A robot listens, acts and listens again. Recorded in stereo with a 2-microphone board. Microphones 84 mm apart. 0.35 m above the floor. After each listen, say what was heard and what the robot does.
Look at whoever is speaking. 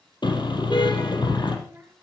The child speaking: about 25° right or 155° right. Turn 25° right.
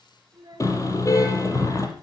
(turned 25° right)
So it is at 130° right. Turn 130° right.
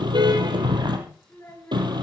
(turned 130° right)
The child speaking is now 30° left. Turn 30° left.
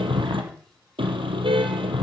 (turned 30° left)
Keep listening.
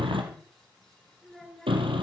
Found it: a child speaking, straight ahead.